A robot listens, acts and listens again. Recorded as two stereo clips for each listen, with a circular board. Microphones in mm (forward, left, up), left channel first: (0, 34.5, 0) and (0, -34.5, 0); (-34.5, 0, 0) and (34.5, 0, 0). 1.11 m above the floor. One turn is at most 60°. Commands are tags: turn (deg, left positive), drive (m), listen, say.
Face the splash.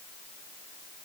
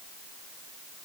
<listen/>
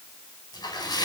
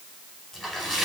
<turn deg="60"/>
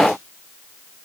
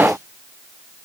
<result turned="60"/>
<turn deg="35"/>
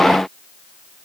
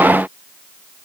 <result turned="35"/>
<say>I heard a splash from this way, but can't make it out now.</say>